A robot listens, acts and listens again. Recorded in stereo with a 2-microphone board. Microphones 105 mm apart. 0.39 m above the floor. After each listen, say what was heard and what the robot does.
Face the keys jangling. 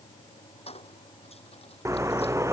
The keys jangling: about 65° left or 115° left. Turn 65° left.
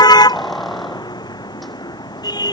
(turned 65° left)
Facing the keys jangling.